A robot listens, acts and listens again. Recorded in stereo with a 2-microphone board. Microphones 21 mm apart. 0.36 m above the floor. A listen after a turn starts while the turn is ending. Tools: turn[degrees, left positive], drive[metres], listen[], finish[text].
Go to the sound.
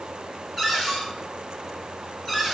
Action: turn[30]
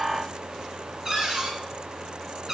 Thought: So it is at 20° right.
Action: turn[-20]
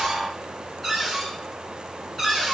Action: drive[1.0]
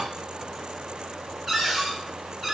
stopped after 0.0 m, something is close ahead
Action: finish[Blocked. The cupboard door is further on, straight ahead.]